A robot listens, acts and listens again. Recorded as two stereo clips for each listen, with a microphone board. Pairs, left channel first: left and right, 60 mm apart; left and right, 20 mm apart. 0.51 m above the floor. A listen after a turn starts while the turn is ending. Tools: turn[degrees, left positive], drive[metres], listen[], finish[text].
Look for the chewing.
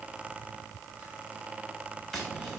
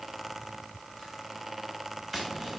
Action: listen[]
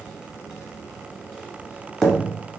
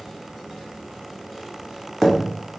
Action: listen[]
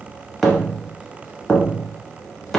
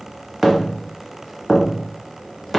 Action: finish[I can't make out chewing to turn to.]